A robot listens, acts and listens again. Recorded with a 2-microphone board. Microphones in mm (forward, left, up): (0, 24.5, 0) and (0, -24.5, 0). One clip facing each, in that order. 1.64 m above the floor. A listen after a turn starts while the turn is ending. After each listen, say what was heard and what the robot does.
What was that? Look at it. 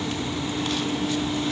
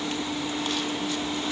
Keep listening.
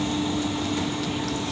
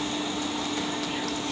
Keep listening.
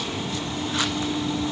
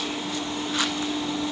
I can't make out anything to turn to.